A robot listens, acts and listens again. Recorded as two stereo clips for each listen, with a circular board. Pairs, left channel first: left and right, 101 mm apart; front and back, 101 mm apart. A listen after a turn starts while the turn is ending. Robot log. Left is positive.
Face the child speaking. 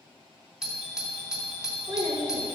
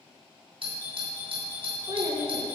note: The child speaking: 130° right.
cmd yaw -130
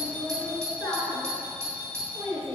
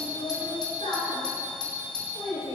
note: The child speaking is now 15° left.
cmd yaw +15
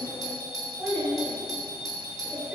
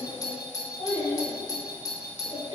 end: Found it: a child speaking, straight ahead.